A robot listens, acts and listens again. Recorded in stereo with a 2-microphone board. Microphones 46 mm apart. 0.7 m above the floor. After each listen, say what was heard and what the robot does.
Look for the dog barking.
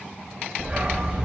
The dog barking: about 20° right or 160° right. Turn 20° right.
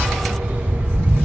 So it is at 140° right. Turn 140° right.
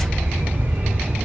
The dog barking is now 50° right. Turn 50° right.
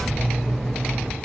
Facing the dog barking, 2 to 4 m away.